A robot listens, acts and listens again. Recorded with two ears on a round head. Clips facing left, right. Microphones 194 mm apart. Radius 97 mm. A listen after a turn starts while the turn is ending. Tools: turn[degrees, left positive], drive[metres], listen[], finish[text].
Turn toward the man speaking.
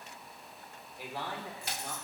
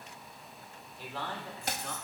Action: turn[30]
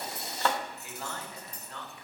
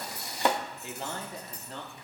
Thought: So it is at 30° right.
Action: turn[-30]
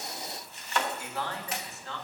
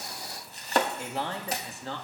Thought: The man speaking is now 30° right.
Action: turn[-30]
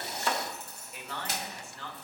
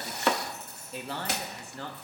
Thought: The man speaking is now 35° right.
Action: turn[-35]
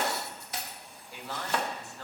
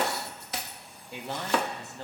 Thought: The man speaking is now 20° right.
Action: turn[-20]
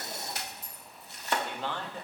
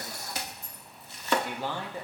Thought: The man speaking is now 10° right.
Action: turn[-10]
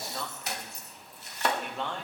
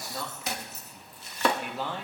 Action: finish[Found it: a man speaking, straight ahead.]